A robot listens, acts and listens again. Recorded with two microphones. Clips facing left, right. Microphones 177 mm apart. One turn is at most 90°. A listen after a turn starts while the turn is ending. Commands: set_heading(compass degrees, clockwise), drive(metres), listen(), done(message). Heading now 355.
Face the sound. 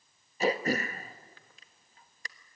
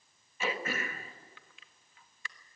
set_heading(315)
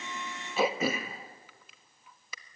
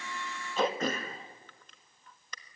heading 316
set_heading(306)
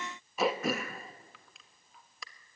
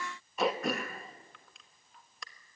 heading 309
done("Found it: throat clearing, straight ahead, 1 to 2 m away.")